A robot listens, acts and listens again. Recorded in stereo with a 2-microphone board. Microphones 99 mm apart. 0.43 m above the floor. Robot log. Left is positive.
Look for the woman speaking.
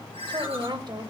note: The woman speaking: about 50° right or 130° right.
cmd yaw -50
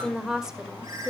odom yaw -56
end: Facing the woman speaking, 1 to 2 m away.